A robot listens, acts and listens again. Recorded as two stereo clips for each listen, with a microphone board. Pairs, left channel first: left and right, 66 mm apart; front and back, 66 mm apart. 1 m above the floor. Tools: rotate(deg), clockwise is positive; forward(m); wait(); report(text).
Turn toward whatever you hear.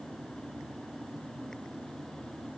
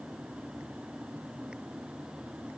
wait()
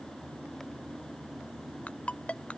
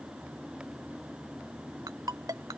rotate(-160)
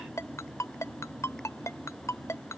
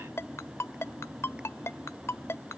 rotate(-50)
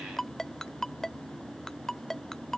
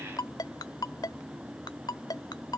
report("Found it: a ringtone, straight ahead.")